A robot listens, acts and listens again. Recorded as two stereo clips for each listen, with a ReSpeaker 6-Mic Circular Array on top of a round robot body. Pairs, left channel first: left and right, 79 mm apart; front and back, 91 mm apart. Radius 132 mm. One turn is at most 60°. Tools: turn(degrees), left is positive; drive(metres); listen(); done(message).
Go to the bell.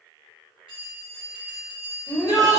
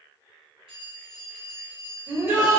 turn(degrees=-60)
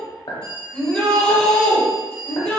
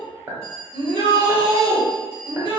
turn(degrees=-60)
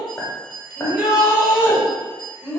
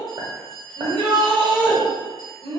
turn(degrees=-60)
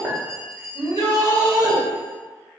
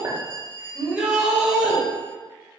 turn(degrees=-35)
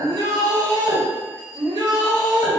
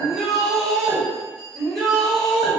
turn(degrees=-15)
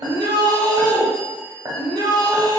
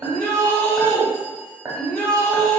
listen()
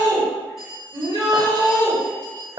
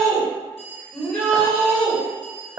drive(metres=1.0)
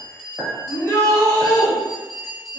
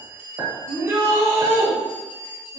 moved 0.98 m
drive(metres=1.0)
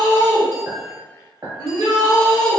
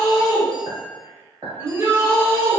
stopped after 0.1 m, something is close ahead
listen()
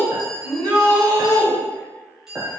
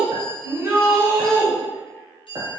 done("Arrived at the bell, straight ahead.")